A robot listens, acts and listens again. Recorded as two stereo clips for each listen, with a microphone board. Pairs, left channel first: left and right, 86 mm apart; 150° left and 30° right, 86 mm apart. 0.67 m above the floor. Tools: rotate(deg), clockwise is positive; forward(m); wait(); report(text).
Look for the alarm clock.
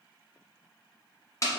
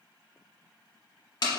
wait()
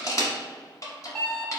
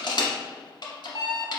rotate(-175)
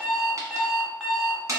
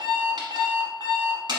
report("Found it: an alarm clock, straight ahead.")